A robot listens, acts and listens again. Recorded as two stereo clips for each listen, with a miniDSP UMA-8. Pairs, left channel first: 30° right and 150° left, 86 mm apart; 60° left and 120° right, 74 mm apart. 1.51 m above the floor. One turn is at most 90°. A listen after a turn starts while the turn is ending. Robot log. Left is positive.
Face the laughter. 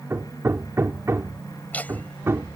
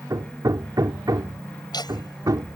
note: The laughter: 40° left.
cmd yaw +40
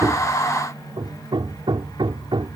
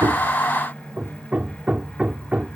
cmd idle
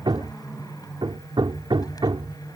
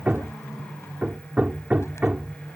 cmd idle
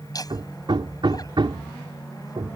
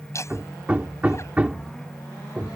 note: The laughter is now 10° left.
cmd yaw +10
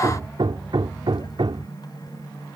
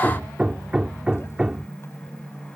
cmd idle
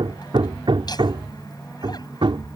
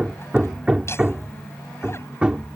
cmd idle
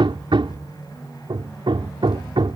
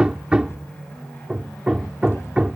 end: Facing where the laughter came from. I can't hear it now.